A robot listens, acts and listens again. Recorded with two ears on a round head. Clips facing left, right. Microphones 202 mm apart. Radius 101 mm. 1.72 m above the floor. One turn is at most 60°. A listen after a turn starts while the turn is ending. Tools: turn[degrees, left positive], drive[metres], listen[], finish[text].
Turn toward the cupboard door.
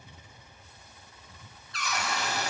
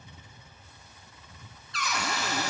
Thought: The cupboard door: about 60° right or 120° right.
Action: turn[-60]
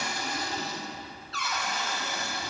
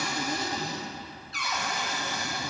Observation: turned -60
Thought: So it is at 15° right.
Action: turn[-15]
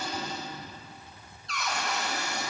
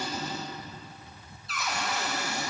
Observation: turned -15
Action: finish[Facing the cupboard door, under 1 m away.]